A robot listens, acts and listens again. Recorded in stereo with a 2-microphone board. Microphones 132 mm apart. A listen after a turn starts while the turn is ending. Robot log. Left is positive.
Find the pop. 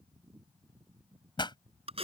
note: The pop: about 35° left or 145° left.
cmd yaw +35
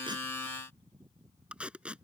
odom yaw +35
cmd idle
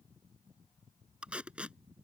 end: I heard a pop, but can't make it out now. It was about straight ahead or 110° left.